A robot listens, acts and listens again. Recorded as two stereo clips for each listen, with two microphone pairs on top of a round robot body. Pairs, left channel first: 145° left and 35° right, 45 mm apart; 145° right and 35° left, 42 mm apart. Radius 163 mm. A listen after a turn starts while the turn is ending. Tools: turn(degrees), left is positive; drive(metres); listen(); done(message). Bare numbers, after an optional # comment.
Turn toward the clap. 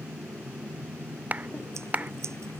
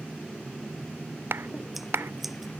# The clap: 20° left.
turn(20)
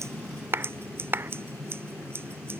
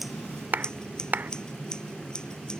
done("Facing the clap.")